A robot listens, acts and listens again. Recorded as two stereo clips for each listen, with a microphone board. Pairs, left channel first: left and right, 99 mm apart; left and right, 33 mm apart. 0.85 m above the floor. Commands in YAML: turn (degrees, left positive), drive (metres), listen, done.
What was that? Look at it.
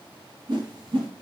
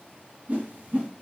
turn: -50
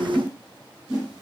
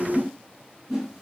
turn: -10
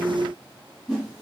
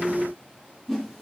done: "Found it: a whoosh, straight ahead, 1 to 2 m away."